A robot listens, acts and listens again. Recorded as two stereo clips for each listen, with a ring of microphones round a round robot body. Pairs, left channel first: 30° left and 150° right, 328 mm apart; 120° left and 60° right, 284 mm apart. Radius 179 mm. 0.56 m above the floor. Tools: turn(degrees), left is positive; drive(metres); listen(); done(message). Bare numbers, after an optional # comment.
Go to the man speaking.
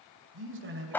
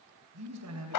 # The man speaking: 95° right.
turn(-95)
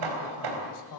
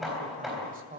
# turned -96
drive(1.0)
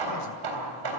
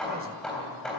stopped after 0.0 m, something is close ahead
listen()
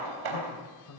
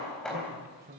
done("Blocked. The man speaking is further on, straight ahead.")